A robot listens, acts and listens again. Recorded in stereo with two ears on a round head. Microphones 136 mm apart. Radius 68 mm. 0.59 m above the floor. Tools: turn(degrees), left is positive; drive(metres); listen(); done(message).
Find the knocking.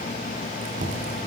turn(degrees=-60)
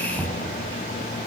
done("Facing the knocking.")